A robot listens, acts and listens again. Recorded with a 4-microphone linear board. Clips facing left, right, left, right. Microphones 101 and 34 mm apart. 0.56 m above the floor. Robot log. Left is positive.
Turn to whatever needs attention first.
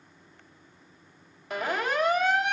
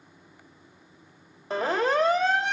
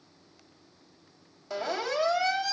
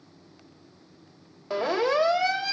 note: The siren: about 30° right or 150° right.
cmd yaw -30
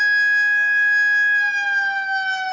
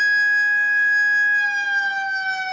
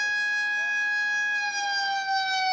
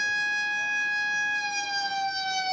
end: Facing the siren, 2 to 4 m away.